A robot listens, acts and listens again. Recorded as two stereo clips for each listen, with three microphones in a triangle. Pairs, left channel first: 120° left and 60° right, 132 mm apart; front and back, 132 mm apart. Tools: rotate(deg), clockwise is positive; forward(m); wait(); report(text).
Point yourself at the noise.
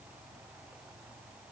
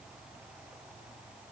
wait()
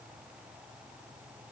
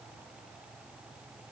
wait()
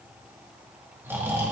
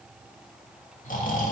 rotate(-15)
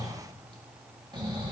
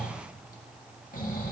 report("Found it: snoring, straight ahead.")